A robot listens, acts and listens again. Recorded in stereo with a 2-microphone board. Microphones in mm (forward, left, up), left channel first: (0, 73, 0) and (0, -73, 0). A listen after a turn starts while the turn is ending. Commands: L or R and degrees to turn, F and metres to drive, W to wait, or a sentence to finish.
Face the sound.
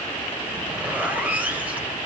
R30
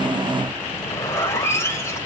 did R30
L20
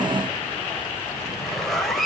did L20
Found it: a zipper, straight ahead, 2 to 4 m away.